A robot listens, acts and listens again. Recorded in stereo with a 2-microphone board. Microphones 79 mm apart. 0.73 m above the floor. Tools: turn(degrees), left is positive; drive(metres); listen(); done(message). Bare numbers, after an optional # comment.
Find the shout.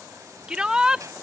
turn(-30)
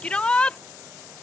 # So it is at 15° left.
turn(15)
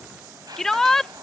done("Facing the shout.")